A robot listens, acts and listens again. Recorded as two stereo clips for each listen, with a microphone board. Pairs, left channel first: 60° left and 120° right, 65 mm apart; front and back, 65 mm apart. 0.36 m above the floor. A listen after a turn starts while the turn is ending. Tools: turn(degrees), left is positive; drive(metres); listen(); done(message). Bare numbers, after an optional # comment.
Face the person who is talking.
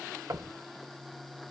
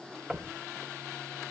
listen()
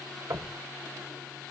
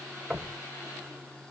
listen()
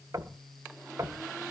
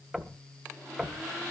done("I can't make out anyone speaking, only knocking.")